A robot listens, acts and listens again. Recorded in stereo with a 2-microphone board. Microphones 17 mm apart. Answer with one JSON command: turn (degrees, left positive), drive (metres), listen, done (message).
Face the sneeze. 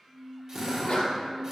{"turn": 90}
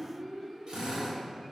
{"done": "I heard a sneeze from this way, but can't make it out now."}